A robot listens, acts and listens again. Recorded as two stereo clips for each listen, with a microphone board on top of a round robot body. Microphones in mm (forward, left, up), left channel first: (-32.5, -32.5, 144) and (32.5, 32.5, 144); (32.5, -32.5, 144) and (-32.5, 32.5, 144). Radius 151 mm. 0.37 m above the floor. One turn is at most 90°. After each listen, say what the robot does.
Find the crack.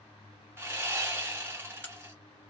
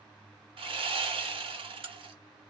Turn 90° left.
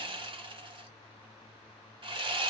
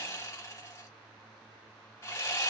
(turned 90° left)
Turn 60° left.
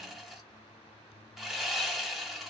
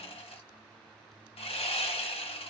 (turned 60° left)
I heard a crack from this way, but can't make it out now.